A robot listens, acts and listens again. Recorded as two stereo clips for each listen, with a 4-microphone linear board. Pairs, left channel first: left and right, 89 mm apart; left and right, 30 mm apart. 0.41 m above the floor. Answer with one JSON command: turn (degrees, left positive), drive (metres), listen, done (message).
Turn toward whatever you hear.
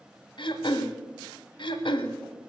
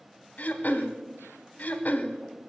{"turn": 65}
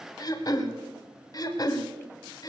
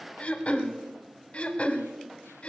{"turn": 50}
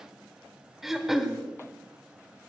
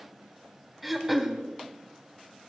{"done": "Facing the throat clearing."}